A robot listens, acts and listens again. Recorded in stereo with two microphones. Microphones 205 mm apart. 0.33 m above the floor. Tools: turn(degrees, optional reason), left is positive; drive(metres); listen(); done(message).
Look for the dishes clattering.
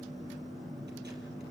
listen()
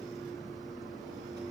listen()
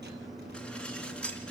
turn(degrees=30)
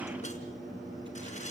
listen()
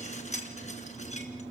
turn(degrees=145, reason="So it is at 145° left.")
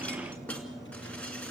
listen()
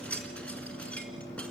done("Found it: dishes clattering, straight ahead.")